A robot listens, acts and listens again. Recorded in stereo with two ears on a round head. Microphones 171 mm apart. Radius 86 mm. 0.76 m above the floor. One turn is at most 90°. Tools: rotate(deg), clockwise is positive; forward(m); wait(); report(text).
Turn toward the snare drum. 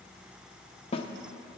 rotate(-30)
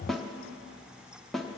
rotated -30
report("Facing the snare drum.")